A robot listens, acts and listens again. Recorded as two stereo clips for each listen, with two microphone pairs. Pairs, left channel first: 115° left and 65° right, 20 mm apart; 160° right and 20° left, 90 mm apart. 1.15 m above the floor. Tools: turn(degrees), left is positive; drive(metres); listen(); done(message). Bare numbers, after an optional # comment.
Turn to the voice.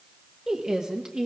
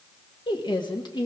# The woman speaking: 130° right.
turn(-130)
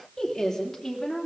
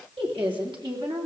# The woman speaking is now 40° left.
turn(40)
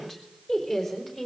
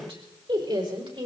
# The woman speaking is now 25° left.
turn(25)
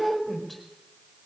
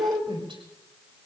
# The woman speaking is now 15° left.
turn(15)
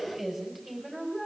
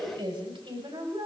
done("Facing the woman speaking, over 4 m away.")